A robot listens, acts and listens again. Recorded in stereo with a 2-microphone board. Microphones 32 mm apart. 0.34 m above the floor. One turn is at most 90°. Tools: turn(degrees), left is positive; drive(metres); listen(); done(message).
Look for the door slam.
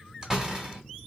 turn(degrees=-20)
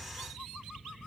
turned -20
listen()
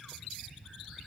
done("I heard a door slam, but can't make it out now. It was about straight ahead or 140° right.")